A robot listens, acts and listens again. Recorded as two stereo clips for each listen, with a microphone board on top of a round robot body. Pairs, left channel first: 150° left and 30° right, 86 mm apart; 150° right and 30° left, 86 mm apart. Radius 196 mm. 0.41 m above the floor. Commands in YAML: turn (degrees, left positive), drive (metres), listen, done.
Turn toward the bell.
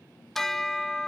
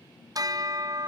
turn: 65
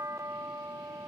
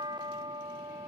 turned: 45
turn: 20
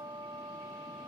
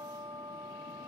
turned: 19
done: "Facing the bell."